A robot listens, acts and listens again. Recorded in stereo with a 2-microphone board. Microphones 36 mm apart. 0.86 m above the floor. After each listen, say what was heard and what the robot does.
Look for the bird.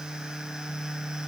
Keep listening.
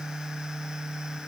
Keep listening.
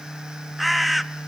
Turn 30° right.
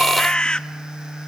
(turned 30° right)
So it is at 25° left. Turn 25° left.
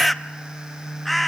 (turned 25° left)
Facing the bird, under 1 m away.